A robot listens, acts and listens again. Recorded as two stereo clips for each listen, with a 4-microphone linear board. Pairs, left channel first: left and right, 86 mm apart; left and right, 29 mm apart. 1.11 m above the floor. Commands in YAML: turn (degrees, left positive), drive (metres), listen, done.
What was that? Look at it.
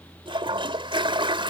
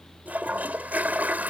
turn: -90
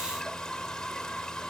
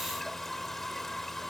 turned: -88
turn: 10
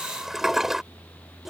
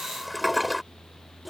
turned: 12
done: "Facing the toilet flushing."